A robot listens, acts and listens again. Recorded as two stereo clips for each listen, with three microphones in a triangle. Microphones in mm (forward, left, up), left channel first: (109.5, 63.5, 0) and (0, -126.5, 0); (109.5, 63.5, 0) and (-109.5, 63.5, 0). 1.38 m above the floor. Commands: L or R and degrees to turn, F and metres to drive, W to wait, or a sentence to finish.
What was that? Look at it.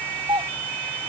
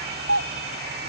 L170
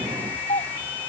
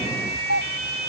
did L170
Found it: a doorbell, straight ahead.